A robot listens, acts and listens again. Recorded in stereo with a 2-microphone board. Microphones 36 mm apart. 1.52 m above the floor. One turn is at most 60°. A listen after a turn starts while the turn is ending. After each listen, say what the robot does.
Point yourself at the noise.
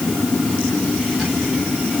Keep listening.
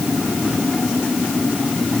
Keep listening.
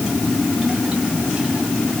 I can't make out anything.